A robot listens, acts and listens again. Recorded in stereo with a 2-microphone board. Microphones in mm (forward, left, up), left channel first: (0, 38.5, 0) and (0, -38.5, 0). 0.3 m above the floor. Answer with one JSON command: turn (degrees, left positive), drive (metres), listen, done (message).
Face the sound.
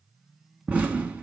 {"turn": -20}
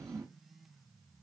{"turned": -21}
{"turn": -140}
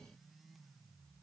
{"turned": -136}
{"done": "Facing where the explosion came from. I can't hear it now."}